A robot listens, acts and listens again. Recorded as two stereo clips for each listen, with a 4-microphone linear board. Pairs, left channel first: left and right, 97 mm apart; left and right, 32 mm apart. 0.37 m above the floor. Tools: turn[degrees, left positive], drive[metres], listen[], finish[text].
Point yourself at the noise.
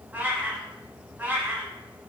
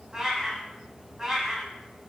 Thought: The cat meowing: about 20° right or 160° right.
Action: turn[-20]
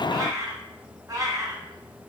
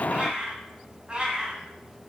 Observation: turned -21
Thought: So it is at 135° right.
Action: turn[-135]
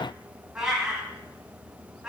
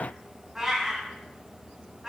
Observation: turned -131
Action: finish[Found it: a cat meowing, straight ahead.]